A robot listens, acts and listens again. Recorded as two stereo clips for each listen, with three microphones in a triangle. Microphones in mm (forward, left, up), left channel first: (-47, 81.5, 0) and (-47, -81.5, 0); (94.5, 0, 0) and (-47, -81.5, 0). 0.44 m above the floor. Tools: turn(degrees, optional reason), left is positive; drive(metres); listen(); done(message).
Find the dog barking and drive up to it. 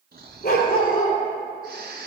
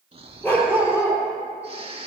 turn(degrees=110, reason="The dog barking: 110° left.")
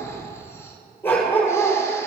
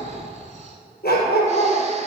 turn(degrees=10, reason="The dog barking is now 10° left.")
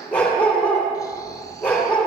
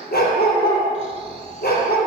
drive(metres=1.0)
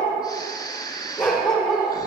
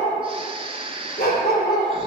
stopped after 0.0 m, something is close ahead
done("Something is in my way. I am facing the dog barking but have not reached it.")